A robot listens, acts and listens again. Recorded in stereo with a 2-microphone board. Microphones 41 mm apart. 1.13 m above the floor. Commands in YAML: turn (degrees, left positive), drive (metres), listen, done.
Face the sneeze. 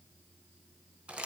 listen: true
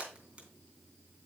listen: true
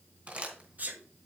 turn: -45
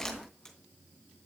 listen: true
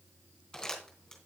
done: "I heard a sneeze, but can't make it out now. It was about straight ahead or 90° right."